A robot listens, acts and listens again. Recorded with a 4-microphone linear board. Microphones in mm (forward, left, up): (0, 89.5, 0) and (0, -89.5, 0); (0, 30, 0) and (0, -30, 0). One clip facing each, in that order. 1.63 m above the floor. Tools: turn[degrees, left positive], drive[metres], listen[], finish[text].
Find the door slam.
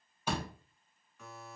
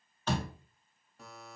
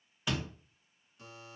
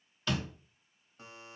Action: turn[30]
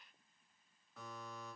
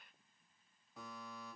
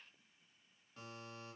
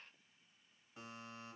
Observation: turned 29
Action: listen[]
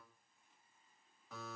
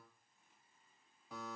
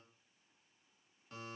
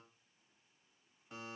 Action: finish[I heard a door slam, but can't make it out now. It was about 20° right or 140° left.]